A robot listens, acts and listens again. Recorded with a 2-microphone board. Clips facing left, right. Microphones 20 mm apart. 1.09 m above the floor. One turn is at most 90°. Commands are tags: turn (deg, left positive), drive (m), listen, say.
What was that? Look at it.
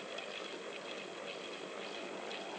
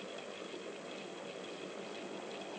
<listen/>
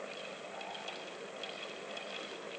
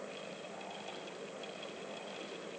<listen/>
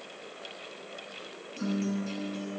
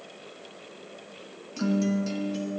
<turn deg="-50"/>
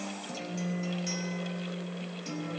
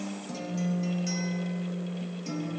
<say>Found it: a guitar, straight ahead, under 1 m away.</say>